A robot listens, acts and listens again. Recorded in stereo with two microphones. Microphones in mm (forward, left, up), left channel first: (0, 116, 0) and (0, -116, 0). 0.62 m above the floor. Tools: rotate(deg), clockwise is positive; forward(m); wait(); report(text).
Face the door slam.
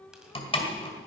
rotate(-25)
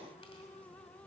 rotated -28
wait()
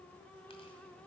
report("I heard a door slam, but can't make it out now. It was about 5° right or 130° left.")